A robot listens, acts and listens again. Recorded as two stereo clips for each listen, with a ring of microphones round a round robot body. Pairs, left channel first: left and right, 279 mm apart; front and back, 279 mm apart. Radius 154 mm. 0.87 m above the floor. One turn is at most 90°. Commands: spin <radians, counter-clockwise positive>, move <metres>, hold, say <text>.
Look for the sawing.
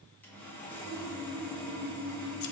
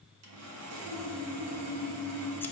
spin 1.57
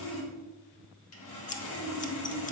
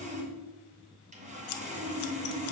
spin 1.57
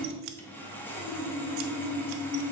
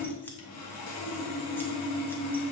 spin 0.17
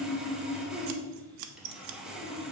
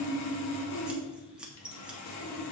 say Facing the sawing.